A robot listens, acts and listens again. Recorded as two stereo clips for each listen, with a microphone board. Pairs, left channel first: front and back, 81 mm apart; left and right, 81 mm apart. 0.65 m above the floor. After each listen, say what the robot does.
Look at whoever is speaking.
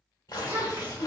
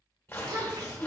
Turn 125° right.
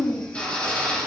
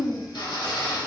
Turn 10° left.
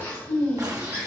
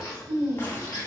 Facing the child speaking, 2 to 4 m away.